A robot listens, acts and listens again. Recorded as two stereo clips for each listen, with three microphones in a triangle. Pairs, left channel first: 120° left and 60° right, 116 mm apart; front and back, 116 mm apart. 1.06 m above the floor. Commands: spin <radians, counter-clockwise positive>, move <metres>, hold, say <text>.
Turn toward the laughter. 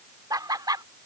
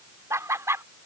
spin -2.01
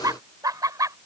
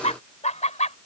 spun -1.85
say Facing the laughter.